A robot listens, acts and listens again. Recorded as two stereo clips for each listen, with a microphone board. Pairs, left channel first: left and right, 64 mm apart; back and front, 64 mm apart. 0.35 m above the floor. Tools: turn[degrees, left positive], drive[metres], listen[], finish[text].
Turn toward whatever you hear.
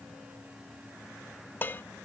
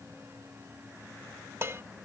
Thought: The dishes clattering: 40° left.
Action: turn[40]
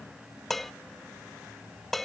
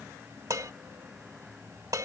Action: finish[Found it: dishes clattering, straight ahead.]